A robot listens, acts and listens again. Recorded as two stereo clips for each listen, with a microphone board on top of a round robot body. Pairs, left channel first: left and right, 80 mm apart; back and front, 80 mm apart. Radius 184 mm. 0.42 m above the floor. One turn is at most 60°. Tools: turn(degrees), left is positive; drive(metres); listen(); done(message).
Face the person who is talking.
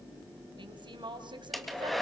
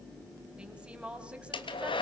turn(degrees=-60)
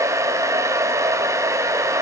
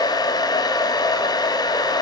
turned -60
turn(degrees=-15)
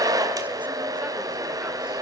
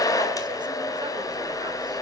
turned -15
listen()
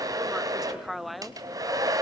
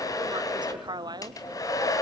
done("Found it: a woman speaking, straight ahead, 1 to 2 m away.")